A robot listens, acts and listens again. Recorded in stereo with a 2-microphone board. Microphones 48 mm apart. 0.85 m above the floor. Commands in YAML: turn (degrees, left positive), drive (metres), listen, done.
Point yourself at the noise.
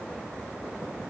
listen: true
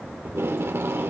turn: -60
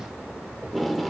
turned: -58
done: "Facing the tape being pulled."